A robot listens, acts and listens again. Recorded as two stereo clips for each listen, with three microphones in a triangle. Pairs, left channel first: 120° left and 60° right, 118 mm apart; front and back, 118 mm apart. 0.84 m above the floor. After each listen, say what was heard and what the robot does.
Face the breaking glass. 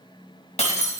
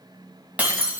The breaking glass: 100° left. Turn 100° left.
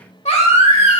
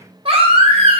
Facing where the breaking glass came from. I can't hear it now.